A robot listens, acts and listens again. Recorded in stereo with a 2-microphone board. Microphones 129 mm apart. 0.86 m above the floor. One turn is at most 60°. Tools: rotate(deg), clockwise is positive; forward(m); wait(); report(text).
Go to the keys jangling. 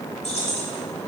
rotate(-55)
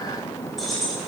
forward(1.0)
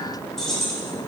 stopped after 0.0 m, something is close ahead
report("Something is in my way. I am facing the keys jangling but have not reached it.")